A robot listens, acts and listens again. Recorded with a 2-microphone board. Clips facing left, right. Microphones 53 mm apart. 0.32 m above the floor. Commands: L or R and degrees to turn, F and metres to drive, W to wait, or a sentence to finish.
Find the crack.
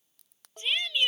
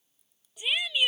L90
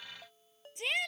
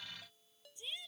Facing where the crack came from. I can't hear it now.